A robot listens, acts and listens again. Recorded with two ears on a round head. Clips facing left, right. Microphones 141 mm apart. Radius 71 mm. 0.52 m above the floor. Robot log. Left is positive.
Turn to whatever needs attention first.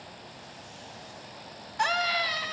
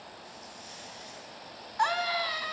note: The scream: about 25° left or 155° left.
cmd yaw +25
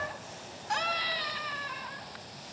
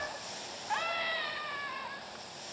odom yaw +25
note: So it is at 130° left.
cmd yaw +130
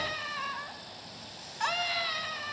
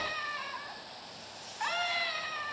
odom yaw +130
note: The scream is now 50° left.
cmd yaw +50
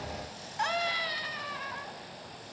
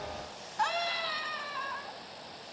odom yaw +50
note: The scream is now 25° left.
cmd yaw +25
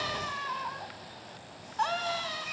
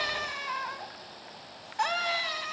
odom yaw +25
note: The scream is now 15° right.
cmd yaw -15
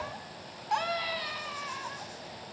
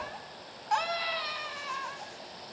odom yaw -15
end: Facing the scream, over 4 m away.